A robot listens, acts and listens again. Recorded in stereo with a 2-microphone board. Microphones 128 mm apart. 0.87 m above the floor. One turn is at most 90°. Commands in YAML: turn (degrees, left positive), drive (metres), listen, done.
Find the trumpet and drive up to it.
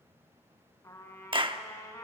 turn: 25
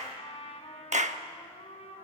turn: 90
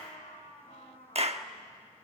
turn: 75
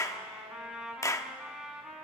drive: 1.0
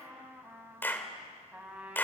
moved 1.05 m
turn: -10
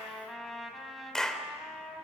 drive: 1.0
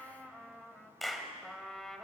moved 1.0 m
drive: 1.0
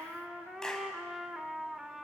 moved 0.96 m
drive: 1.0
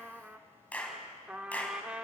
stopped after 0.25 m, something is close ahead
turn: -10
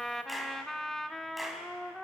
done: "I am next to the trumpet."